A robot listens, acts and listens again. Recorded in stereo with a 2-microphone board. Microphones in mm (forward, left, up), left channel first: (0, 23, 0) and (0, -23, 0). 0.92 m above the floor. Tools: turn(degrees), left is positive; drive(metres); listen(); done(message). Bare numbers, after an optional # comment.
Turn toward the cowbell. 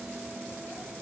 listen()
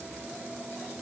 listen()
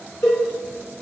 turn(90)
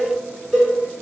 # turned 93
# So it is at 10° right.
turn(-10)
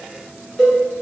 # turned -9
done("Found it: a cowbell, straight ahead, 1 to 2 m away.")